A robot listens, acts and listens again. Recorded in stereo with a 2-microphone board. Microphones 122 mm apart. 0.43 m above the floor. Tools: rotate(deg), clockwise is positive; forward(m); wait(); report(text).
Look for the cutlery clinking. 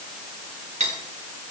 rotate(90)
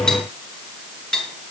report("Found it: cutlery clinking, straight ahead.")